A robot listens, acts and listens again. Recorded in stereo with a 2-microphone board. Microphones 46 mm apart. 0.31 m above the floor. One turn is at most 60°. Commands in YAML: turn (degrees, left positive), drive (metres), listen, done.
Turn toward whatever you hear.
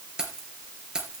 turn: -15
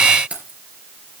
turn: -60
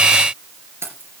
turn: -60
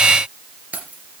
turn: -35
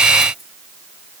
listen: true
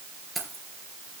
done: "Found it: keys jangling, straight ahead, 2 to 4 m away."